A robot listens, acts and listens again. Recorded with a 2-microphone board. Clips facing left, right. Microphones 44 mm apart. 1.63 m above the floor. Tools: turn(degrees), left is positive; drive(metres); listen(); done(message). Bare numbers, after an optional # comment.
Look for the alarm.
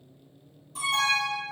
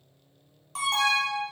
# The alarm: about 60° right or 120° right.
turn(-60)
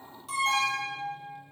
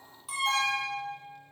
done("Facing the alarm.")